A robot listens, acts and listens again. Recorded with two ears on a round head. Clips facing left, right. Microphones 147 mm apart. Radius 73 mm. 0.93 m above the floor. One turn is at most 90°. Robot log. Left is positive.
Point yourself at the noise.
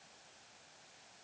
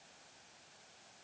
cmd idle
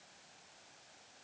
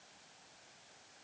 cmd idle
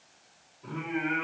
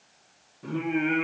note: The singing: about 55° right or 125° right.
cmd yaw -55
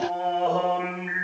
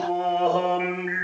note: So it is at 25° right.
cmd yaw -25
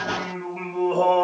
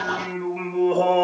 note: The singing is now 20° right.
cmd yaw -20
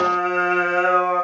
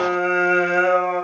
note: The singing is now 15° right.
cmd yaw -15
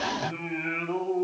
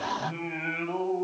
end: Facing the singing, 1 to 2 m away.